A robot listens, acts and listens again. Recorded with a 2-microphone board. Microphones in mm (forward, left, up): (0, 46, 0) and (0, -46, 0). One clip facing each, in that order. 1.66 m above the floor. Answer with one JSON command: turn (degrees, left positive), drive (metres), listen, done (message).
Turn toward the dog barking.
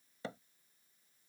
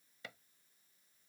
{"listen": true}
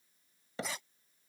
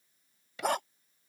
{"turn": -70}
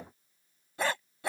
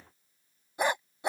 {"turn": -20}
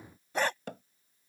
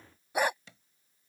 {"turn": -15}
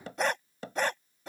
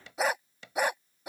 {"turn": -15}
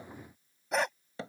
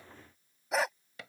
{"done": "Facing the dog barking."}